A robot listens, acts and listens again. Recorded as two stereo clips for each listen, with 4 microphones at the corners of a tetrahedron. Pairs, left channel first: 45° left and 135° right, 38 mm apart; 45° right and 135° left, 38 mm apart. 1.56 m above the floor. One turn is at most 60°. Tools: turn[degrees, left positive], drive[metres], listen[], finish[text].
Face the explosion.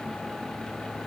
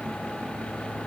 Action: listen[]
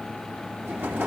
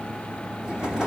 Thought: The explosion: 155° right.
Action: turn[-60]
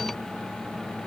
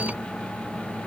Thought: Nothing new. It was at 95° right.
Action: turn[-60]
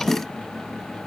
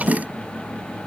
Thought: Nothing new. It was at 35° right.
Action: turn[-35]
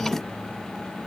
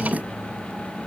Action: finish[I heard an explosion from this way, but can't make it out now.]